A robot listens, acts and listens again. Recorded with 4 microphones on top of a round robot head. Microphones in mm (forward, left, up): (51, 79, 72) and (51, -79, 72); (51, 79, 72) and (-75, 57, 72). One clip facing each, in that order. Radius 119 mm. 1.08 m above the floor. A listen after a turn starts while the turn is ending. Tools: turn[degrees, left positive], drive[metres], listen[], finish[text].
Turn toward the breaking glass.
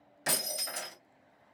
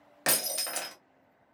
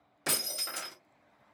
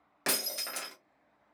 Thought: The breaking glass: 125° right.
Action: turn[-125]
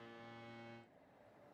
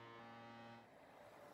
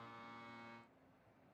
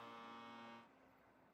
Action: finish[I heard breaking glass from this way, but can't make it out now.]